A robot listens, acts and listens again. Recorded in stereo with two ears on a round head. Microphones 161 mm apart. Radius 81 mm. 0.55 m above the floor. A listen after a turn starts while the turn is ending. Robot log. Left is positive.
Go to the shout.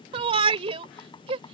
note: The shout: about 30° right or 150° right.
cmd yaw -30
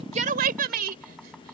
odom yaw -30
note: So it is at 120° right.
cmd yaw -120
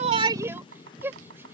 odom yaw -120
note: The shout is now 15° right.
cmd yaw -15
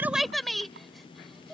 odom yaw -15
cmd fwd 1.0
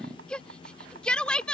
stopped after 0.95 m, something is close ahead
end: I am next to the shout.